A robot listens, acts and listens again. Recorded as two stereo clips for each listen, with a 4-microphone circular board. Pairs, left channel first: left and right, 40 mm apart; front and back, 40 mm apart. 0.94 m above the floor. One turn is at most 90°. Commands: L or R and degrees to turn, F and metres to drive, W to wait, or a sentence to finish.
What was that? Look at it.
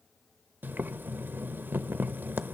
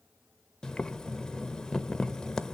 R70
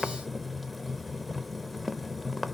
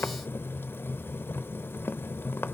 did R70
Facing the boiling, under 1 m away.